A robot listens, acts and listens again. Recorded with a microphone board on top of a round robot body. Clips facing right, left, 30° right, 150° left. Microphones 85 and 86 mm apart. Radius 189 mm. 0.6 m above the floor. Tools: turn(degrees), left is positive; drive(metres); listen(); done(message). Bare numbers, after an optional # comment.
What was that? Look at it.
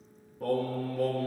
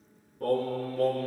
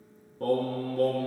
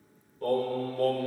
done("Facing the singing, 2 to 4 m away.")